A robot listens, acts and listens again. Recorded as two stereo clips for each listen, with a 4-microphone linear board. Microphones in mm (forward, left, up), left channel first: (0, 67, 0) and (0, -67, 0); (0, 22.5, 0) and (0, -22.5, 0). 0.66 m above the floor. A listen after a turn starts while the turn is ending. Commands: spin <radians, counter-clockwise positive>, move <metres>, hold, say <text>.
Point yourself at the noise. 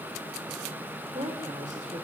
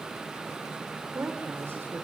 spin -1.05
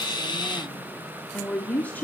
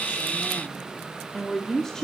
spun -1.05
spin 0.26
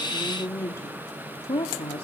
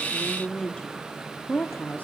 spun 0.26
spin 0.70
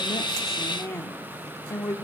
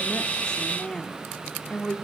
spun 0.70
spin 0.35
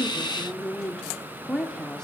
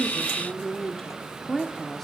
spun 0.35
say Found it: a woman speaking, straight ahead.